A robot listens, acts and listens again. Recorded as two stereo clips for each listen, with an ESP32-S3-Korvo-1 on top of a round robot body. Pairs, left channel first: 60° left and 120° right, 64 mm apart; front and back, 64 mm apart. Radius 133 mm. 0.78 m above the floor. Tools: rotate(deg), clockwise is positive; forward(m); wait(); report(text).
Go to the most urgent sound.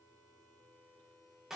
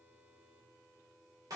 wait()
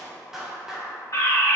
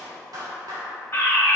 rotate(-50)
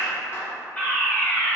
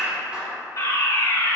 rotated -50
forward(1.0)
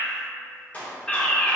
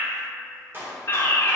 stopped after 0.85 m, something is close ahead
report("Arrived at the fire alarm, straight ahead.")